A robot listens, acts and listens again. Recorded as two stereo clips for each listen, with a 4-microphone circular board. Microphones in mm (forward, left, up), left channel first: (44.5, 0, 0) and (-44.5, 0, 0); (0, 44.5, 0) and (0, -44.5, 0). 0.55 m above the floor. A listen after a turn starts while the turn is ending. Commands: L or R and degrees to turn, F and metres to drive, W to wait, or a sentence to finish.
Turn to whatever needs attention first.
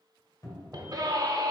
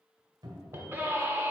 R150
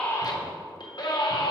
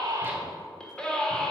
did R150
L10
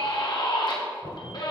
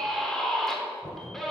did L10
Found it: a scream, straight ahead, 1 to 2 m away.